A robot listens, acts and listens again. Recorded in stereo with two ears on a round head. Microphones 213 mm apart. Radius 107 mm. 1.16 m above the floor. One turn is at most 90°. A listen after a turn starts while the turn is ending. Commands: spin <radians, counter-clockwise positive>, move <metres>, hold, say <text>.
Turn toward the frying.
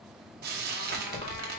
spin -0.70
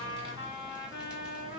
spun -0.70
hold
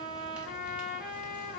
hold
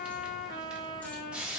say Found it: frying, straight ahead, under 1 m away.